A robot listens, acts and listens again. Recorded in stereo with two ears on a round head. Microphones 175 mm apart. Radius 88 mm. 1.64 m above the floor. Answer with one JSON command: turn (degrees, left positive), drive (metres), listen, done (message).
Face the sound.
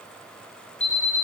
{"turn": 40}
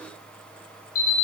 {"turn": 100}
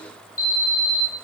{"turn": 45}
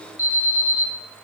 {"turn": 15}
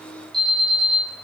{"done": "Facing the alarm."}